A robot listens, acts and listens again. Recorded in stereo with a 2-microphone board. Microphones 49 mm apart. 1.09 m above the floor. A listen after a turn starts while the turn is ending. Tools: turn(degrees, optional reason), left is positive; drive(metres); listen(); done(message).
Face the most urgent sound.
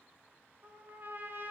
listen()
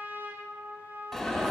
turn(degrees=30)
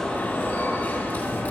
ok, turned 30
turn(degrees=145, reason="So it is at 145° left.")
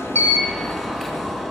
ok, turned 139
turn(degrees=10, reason="The alarm is now 10° left.")
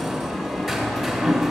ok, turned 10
done("Facing the alarm.")